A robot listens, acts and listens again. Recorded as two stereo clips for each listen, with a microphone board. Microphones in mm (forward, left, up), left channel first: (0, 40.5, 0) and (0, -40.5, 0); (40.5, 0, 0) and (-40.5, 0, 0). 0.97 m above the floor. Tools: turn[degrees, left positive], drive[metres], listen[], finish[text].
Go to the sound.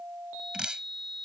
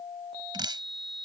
Thought: The dripping: 170° right.
Action: turn[-170]
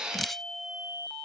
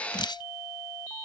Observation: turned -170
Action: drive[1.0]
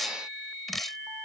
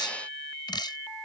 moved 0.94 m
Action: drive[1.0]
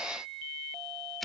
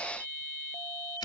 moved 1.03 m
Action: listen[]
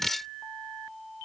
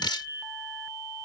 Action: drive[1.0]
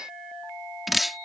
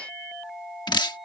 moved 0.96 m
Action: drive[1.0]
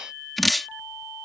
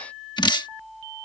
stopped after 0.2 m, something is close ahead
Action: finish[Arrived at the dripping, straight ahead.]